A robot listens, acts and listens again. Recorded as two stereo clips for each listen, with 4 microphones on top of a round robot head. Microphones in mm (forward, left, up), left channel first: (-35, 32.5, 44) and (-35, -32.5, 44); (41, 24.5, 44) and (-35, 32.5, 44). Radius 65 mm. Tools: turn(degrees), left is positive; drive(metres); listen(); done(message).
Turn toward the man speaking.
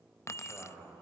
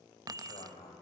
done("Facing the man speaking.")